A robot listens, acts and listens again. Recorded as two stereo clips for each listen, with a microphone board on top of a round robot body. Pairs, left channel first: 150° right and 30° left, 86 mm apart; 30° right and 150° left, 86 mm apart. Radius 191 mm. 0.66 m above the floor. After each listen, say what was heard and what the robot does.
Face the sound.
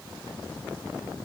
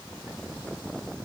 Keep listening.
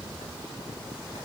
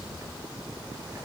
Keep listening.
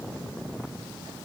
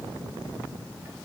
I can't make out anything to turn to.